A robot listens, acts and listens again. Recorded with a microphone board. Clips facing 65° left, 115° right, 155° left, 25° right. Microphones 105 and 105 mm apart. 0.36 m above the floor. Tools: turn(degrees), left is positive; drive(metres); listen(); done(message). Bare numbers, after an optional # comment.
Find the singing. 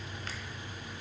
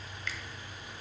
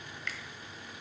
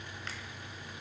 listen()
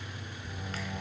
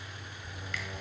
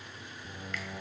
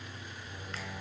# The singing: 155° left.
turn(155)
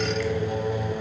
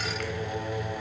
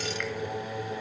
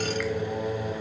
done("Found it: singing, straight ahead, 2 to 4 m away.")